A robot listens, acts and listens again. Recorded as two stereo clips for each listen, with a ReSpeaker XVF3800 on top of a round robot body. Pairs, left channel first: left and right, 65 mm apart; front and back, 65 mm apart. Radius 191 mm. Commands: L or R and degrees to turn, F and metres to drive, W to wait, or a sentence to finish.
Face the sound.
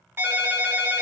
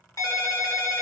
R35
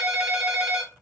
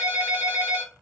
Found it: a ringtone, straight ahead.